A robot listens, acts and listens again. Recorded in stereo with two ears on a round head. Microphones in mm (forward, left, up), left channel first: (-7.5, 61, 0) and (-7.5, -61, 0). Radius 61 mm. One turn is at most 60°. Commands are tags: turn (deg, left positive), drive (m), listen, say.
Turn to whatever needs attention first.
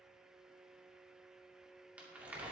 <listen/>
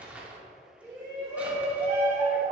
<turn deg="-30"/>
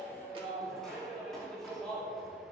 <say>Found it: a shout, straight ahead, 2 to 4 m away.</say>